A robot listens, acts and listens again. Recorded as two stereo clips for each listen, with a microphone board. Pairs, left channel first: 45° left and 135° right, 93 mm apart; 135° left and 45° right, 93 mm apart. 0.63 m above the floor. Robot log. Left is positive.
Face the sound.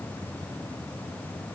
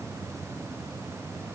cmd idle
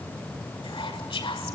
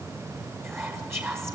note: The whispering: 15° left.
cmd yaw +15
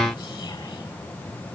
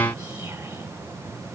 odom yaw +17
cmd idle
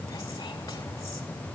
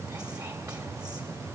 cmd idle
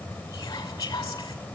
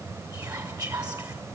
end: Facing the whispering.